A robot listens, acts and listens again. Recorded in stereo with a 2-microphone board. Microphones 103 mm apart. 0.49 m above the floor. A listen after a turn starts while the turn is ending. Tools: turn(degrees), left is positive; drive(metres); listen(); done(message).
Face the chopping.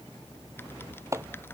turn(degrees=-30)
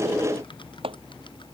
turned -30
turn(degrees=-120)
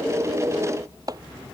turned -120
turn(degrees=-35)
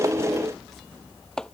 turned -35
done("Found it: chopping, straight ahead.")